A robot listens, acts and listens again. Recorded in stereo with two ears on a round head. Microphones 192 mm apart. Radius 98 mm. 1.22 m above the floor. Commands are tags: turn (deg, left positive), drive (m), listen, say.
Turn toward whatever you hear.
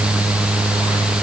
<listen/>
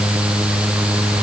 <listen/>
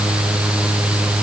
<say>I can't make out anything to turn to.</say>